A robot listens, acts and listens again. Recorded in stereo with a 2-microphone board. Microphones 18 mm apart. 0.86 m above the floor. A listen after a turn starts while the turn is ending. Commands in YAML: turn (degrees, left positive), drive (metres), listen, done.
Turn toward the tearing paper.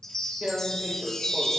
turn: -30
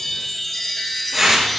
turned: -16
turn: -15
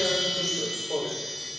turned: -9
done: "Found it: tearing paper, straight ahead."